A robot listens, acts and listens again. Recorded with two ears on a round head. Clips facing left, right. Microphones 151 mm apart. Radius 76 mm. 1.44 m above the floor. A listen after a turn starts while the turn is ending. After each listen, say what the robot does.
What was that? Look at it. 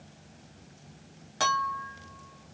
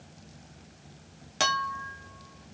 Turn 30° right.
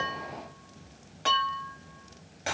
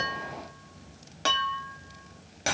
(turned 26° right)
Turn 125° right.
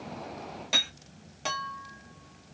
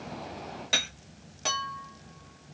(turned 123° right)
Facing the clink.